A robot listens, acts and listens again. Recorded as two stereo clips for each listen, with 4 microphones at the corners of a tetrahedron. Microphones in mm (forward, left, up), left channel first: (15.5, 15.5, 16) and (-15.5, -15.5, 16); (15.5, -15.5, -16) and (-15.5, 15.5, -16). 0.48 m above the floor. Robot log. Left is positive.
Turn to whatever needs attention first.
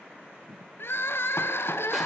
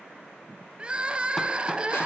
note: The crying: 70° left.
cmd yaw +70
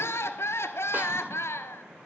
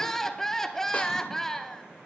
note: The crying is now 35° left.
cmd yaw +35
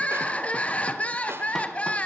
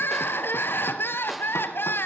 note: The crying is now 15° right.
cmd yaw -15
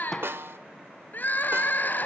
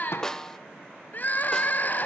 end: Facing the crying, 1 to 2 m away.